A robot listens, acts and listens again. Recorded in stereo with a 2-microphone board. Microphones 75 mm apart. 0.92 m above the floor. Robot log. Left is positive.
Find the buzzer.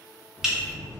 note: The buzzer: about 40° left or 140° left.
cmd yaw +40
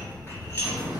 note: So it is at 95° left.
cmd yaw +95
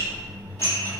note: The buzzer is now 15° right.
cmd yaw -15
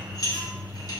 end: Facing the buzzer, under 1 m away.